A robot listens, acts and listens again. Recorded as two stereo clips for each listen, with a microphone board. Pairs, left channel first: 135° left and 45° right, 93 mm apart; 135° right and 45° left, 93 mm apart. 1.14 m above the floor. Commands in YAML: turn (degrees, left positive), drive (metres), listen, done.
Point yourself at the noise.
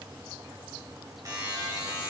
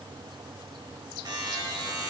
done: "Found it: a buzzer, straight ahead."